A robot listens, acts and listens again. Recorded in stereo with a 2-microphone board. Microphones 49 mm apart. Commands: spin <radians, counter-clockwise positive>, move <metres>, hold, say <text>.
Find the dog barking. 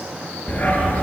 spin 0.70
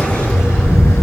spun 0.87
spin 1.75
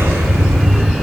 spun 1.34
say Found it: a dog barking, straight ahead, 2 to 4 m away.